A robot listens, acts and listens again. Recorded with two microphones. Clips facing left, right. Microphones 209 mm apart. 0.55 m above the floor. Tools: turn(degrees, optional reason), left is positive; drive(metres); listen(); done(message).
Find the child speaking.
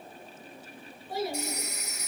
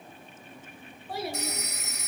turn(degrees=-60, reason="The child speaking: about 60° right or 120° right.")
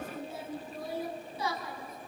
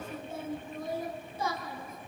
turn(degrees=-55, reason="So it is at 55° right.")
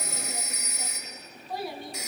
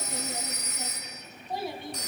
turn(degrees=-25, reason="The child speaking is now 25° right.")
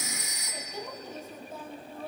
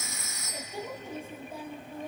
turn(degrees=-15, reason="The child speaking is now 15° right.")
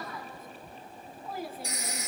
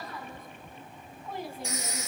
done("Found it: a child speaking, straight ahead, 2 to 4 m away.")